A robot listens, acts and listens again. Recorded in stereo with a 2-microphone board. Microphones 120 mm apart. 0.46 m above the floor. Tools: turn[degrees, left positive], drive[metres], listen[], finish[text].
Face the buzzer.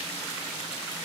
Action: listen[]
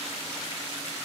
Action: listen[]
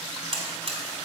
Thought: The buzzer: about 55° right or 125° right.
Action: turn[-55]
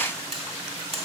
Thought: So it is at 65° right.
Action: turn[-65]
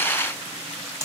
Thought: The buzzer is now 30° right.
Action: turn[-30]
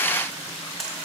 Action: finish[Facing the buzzer.]